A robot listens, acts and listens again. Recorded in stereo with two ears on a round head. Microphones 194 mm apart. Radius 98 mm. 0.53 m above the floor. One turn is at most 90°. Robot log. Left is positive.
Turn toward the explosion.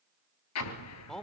cmd yaw +90
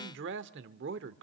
end: Facing where the explosion came from. I can't hear it now.